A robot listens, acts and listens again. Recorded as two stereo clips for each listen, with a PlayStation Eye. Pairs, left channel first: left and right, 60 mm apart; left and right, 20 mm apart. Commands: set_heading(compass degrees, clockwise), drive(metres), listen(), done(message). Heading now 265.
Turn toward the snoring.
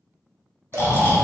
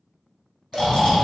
set_heading(225)
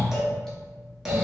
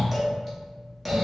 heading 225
done("Facing the snoring.")